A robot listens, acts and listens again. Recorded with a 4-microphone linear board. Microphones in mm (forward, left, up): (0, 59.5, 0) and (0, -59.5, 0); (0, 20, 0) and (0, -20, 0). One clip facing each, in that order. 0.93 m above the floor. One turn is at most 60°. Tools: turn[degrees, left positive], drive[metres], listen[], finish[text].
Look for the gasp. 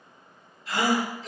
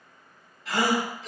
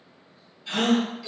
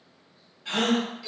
Action: turn[-60]
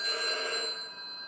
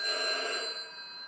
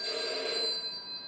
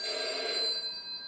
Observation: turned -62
Thought: Nothing new. It was at 30° right.
Action: turn[-30]
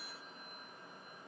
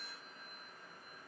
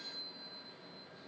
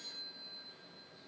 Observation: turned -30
Action: finish[Facing where the gasp came from. I can't hear it now.]